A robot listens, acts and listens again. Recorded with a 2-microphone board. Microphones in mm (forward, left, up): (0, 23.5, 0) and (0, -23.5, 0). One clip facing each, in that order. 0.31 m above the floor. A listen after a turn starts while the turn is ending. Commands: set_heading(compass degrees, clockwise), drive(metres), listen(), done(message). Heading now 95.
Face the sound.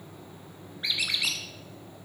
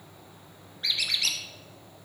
set_heading(80)
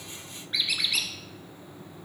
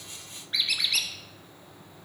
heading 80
done("Facing the squeak.")